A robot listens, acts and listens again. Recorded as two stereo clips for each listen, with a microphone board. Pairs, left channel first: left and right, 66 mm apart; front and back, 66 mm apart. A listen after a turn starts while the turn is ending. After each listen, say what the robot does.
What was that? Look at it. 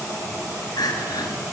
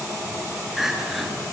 Turn 95° left.
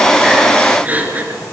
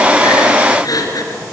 Turn 25° right.
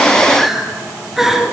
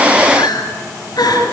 Facing the crying, 2 to 4 m away.